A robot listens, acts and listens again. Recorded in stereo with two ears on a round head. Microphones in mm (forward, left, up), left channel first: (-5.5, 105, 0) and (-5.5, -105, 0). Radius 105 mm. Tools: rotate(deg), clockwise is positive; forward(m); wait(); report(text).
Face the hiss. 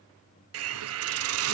rotate(65)
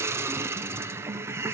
rotate(10)
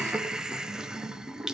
report("Found it: a hiss, straight ahead, under 1 m away.")